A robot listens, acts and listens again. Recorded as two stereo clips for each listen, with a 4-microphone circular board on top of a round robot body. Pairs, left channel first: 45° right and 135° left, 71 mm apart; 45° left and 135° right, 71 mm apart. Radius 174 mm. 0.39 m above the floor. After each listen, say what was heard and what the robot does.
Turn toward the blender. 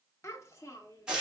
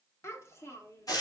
Keep listening.
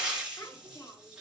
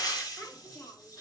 Keep listening.
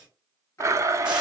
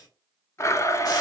The blender: 90° left. Turn 90° left.
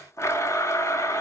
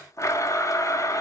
Found it: a blender, straight ahead, under 1 m away.